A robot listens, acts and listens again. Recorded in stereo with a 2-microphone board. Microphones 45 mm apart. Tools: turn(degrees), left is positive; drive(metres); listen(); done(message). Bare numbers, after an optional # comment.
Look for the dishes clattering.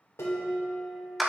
turn(90)
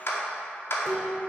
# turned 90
done("Facing the dishes clattering.")